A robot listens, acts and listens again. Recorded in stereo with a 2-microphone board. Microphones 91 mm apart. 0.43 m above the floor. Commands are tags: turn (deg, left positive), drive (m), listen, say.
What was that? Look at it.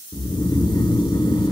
<turn deg="60"/>
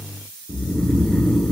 <turn deg="10"/>
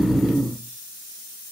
<say>Found it: snoring, straight ahead.</say>